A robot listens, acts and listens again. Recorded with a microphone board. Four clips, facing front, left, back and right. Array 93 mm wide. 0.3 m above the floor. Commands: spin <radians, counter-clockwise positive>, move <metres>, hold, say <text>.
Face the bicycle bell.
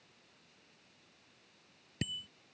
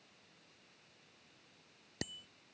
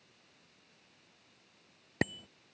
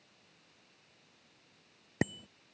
spin -2.71
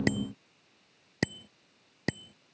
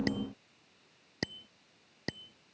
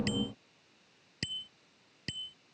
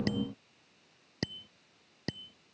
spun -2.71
say Facing the bicycle bell.